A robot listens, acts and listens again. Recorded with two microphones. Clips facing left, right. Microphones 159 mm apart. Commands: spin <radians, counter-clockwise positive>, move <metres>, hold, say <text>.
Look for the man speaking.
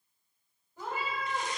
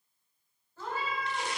hold
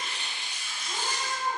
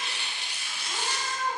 hold
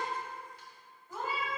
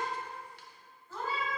say I can't make out a man speaking, only a cat meowing and tearing paper.